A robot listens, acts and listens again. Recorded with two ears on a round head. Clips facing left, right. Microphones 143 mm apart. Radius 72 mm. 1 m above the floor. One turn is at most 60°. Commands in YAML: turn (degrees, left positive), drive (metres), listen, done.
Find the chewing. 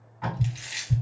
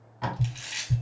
turn: 20
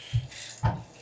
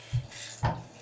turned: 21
turn: 60
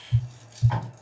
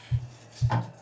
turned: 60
turn: 60
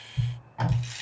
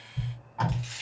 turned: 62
turn: 15
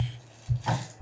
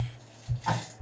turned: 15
listen: true
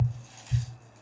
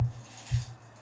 listen: true
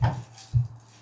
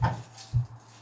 done: "I heard chewing from this way, but can't make it out now."